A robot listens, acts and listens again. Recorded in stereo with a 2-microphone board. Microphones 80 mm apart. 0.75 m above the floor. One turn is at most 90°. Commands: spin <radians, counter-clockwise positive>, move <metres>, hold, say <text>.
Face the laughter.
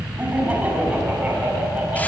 spin -0.35
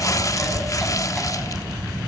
hold
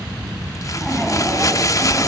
hold
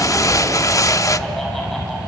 say I heard laughter, but can't make it out now. It was about straight ahead or 140° right.